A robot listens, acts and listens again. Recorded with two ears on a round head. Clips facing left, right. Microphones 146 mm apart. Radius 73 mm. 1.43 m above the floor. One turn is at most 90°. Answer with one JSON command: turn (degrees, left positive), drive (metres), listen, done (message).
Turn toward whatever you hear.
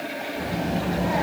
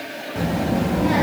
{"turn": -70}
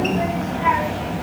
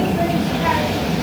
{"turn": -50}
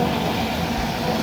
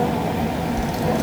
{"turn": -25}
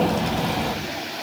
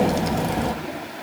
{"turn": -25}
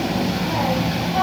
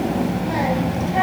{"turn": -10}
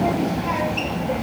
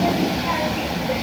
{"done": "Facing the child speaking."}